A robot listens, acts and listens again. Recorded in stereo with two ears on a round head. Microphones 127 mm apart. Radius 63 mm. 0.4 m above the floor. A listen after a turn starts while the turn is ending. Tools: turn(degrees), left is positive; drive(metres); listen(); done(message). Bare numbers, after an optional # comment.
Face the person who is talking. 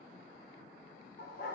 listen()
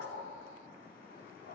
listen()
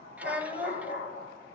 turn(-30)
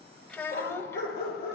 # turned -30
# So it is at 20° left.
turn(20)
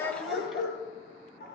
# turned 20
listen()
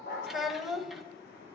done("Facing the child speaking, 1 to 2 m away.")